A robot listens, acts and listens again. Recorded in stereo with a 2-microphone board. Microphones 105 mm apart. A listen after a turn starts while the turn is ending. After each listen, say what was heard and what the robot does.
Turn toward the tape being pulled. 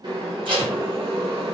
The tape being pulled: about 50° right or 130° right. Turn 50° right.
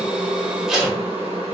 Found it: tape being pulled, straight ahead, 1 to 2 m away.